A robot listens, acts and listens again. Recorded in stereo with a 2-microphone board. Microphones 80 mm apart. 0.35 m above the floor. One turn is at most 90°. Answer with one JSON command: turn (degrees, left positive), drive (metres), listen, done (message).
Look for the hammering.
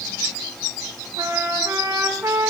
{"listen": true}
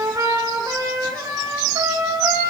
{"listen": true}
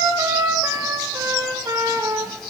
{"done": "I can't make out hammering, only a trumpet."}